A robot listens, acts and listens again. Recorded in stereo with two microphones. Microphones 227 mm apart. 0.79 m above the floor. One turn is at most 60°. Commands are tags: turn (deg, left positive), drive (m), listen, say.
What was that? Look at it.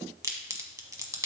<turn deg="-30"/>
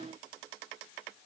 <listen/>
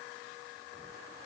<say>I heard a crack, but can't make it out now. It was about 15° left or 135° right.</say>